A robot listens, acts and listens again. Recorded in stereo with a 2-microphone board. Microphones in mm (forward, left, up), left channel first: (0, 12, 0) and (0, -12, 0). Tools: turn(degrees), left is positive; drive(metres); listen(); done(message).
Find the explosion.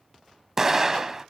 turn(degrees=-20)
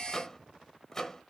listen()
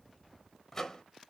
done("I heard an explosion, but can't make it out now. It was about straight ahead or 140° right.")